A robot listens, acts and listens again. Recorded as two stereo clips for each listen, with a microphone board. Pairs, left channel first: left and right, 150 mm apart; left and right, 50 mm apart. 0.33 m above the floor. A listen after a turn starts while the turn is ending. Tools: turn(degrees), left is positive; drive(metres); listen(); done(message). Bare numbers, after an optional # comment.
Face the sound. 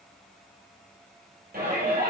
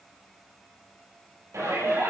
turn(-90)
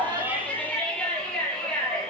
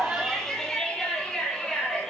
done("Found it: a shout, straight ahead.")